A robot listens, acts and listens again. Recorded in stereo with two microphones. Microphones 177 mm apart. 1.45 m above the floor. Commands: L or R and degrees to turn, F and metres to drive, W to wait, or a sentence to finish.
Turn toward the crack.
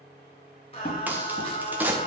R30
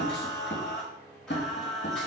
W
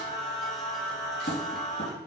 I heard a crack, but can't make it out now. It was about 20° left or 140° right.